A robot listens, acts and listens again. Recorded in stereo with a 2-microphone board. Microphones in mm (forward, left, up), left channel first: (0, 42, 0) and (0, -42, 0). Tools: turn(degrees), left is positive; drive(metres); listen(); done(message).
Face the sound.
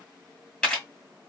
turn(degrees=30)
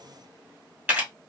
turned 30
turn(degrees=-20)
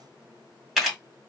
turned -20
done("Found it: a camera shutter, straight ahead.")